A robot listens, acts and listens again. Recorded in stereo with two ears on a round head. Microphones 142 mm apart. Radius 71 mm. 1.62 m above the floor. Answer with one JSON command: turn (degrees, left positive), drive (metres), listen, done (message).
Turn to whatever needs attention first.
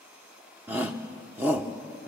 {"turn": -30}
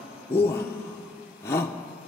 {"turn": 15}
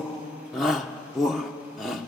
{"done": "Facing the shout."}